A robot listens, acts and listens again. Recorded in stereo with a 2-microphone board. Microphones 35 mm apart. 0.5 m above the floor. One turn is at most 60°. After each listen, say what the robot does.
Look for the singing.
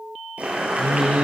Turn 40° right.
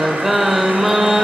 Turn 10° right.
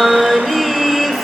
Facing the singing, 2 to 4 m away.